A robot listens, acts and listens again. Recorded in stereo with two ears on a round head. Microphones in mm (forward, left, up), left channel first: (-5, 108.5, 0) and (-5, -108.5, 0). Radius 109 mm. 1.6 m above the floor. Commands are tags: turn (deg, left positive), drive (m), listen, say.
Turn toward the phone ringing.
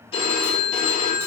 <turn deg="25"/>
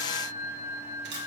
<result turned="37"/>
<turn deg="-15"/>
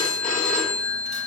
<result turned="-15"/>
<say>Found it: a phone ringing, straight ahead, 1 to 2 m away.</say>